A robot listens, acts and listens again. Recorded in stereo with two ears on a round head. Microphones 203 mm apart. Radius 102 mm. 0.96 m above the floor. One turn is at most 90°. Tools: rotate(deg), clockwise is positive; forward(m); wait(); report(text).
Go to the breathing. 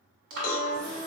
rotate(60)
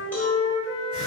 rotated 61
wait()
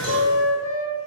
wait()
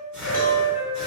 forward(1.0)
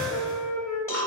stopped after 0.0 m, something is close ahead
report("Blocked. The breathing is further on, straight ahead.")